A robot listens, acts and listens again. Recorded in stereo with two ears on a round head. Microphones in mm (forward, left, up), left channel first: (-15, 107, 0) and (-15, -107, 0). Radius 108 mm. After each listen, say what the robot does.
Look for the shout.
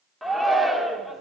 Turn 30° left.
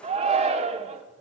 Turn 30° right.
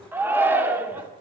Turn 10° right.
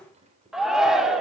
Found it: a shout, straight ahead, 1 to 2 m away.